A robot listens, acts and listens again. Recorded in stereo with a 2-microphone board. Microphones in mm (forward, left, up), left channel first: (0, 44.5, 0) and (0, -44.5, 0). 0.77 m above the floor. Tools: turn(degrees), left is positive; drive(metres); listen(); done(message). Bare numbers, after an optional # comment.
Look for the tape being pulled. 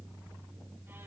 listen()
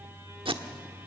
turn(-90)
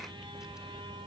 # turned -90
listen()
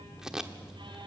done("Found it: tape being pulled, straight ahead.")